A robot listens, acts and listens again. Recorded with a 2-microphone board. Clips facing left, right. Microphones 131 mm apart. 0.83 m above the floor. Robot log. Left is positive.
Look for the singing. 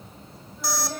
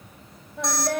cmd yaw -90
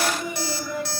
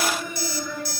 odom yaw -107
note: So it is at 20° left.
cmd yaw +20
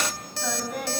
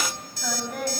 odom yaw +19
end: Found it: singing, straight ahead.